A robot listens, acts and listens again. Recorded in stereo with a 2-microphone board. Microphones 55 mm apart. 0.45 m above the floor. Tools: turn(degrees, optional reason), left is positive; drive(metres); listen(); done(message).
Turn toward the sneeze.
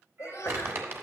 turn(degrees=55, reason="The sneeze: about 55° left or 125° left.")
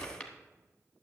listen()
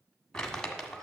done("I heard a sneeze, but can't make it out now. It was about straight ahead or 70° left.")